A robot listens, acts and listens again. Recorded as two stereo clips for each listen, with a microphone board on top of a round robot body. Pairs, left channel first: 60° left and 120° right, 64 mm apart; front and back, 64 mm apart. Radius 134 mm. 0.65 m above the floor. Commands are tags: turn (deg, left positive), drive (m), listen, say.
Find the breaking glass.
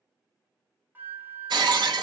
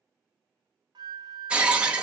<turn deg="-105"/>
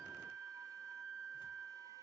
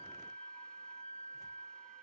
<say>Facing where the breaking glass came from. I can't hear it now.</say>